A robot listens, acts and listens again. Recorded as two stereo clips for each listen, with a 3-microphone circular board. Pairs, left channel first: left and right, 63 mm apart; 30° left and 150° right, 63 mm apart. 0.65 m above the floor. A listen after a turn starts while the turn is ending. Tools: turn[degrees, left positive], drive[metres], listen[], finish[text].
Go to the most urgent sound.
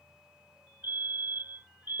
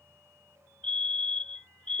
Thought: The fire alarm: 40° right.
Action: turn[-40]
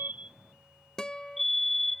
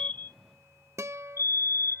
Action: drive[1.0]
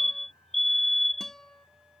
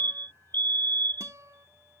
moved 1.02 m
Action: drive[1.0]
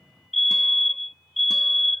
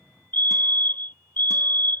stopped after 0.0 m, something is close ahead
Action: finish[I am next to the fire alarm.]